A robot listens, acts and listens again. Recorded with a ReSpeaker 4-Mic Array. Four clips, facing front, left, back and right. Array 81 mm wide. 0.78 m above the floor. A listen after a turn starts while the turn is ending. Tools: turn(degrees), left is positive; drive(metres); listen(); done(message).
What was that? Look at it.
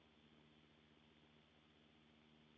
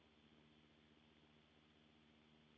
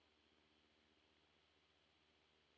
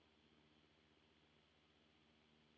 listen()
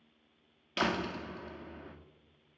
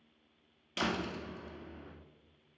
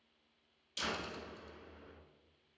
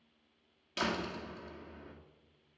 done("Found it: a door slam, straight ahead, under 1 m away.")